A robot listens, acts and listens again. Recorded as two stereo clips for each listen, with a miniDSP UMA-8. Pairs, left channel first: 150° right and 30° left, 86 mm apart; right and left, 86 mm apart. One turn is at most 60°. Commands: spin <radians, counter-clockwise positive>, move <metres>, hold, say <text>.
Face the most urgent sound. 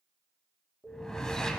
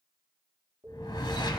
spin 1.05
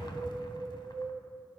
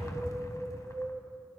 spin 1.05
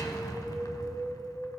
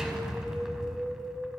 spin 0.52
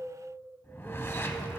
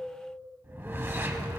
spin 0.17
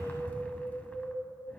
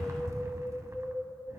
say Found it: an alarm, straight ahead.